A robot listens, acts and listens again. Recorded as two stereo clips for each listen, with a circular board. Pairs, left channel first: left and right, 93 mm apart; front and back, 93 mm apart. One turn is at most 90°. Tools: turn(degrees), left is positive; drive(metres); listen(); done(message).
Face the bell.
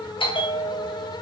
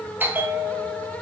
turn(degrees=90)
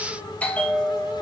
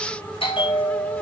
turn(degrees=15)
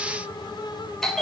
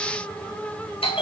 done("Facing the bell.")